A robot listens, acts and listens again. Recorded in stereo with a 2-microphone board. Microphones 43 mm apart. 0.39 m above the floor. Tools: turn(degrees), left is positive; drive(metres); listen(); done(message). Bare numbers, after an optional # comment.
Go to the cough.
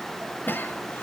# The cough: about 55° left or 125° left.
turn(55)
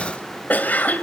# So it is at 50° left.
turn(50)
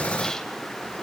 listen()
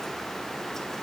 listen()
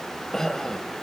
# The cough is now 15° left.
turn(15)
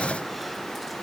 listen()
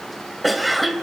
drive(1.0)
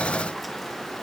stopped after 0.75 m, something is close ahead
listen()
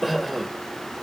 done("I am next to the cough.")